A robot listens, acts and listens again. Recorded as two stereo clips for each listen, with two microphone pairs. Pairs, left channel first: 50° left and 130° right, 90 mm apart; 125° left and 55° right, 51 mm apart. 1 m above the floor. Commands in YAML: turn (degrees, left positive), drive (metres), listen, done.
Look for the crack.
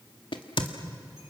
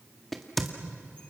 turn: 40
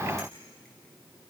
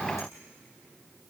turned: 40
done: "Facing where the crack came from. I can't hear it now."